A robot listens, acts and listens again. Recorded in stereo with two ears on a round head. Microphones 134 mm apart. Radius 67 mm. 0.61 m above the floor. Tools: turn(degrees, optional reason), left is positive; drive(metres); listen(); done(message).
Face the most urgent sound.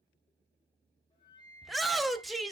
turn(degrees=30)
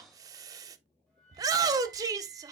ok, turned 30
turn(degrees=-30, reason="So it is at 30° right.")
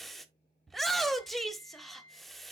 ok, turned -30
done("Facing the shout, 1 to 2 m away.")